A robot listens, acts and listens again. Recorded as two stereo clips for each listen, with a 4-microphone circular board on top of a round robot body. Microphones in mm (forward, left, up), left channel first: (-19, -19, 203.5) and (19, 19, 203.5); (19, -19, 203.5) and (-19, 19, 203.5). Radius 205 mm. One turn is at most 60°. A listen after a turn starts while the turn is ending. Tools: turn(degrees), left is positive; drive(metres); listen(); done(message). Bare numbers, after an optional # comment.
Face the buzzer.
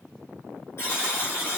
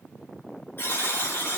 # The buzzer: 95° right.
turn(-60)
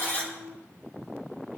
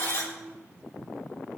# Nothing new. It was at 35° right.
turn(-35)
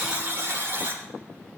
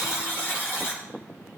done("Found it: a buzzer, straight ahead.")